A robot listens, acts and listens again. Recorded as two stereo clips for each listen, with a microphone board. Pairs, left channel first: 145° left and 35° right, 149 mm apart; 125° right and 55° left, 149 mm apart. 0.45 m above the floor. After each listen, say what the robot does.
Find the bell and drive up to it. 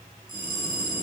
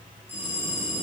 Turn 20° right.
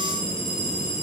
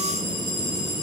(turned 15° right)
Keep listening.
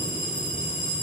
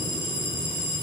Drive 1.0 m forward.
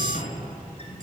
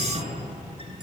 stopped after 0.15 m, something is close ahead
Keep listening.
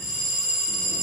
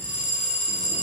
Something is in my way. I am facing the bell but have not reached it.